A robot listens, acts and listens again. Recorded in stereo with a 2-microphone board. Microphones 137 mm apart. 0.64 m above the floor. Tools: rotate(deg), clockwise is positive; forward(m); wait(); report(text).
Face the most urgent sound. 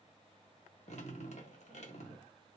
wait()
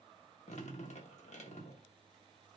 wait()
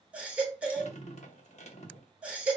rotate(30)
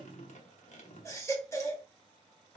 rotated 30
rotate(-20)
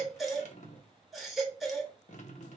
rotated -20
report("Found it: a baby crying, straight ahead, 1 to 2 m away.")